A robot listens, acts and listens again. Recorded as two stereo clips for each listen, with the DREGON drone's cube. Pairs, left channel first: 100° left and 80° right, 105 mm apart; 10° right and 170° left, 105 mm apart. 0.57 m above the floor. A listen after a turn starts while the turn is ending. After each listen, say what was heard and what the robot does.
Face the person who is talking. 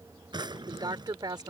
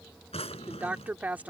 The woman speaking: 115° right. Turn 115° right.
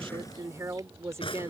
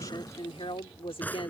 The woman speaking is now 20° right. Turn 20° right.
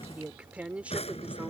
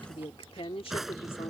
Found it: a woman speaking, straight ahead.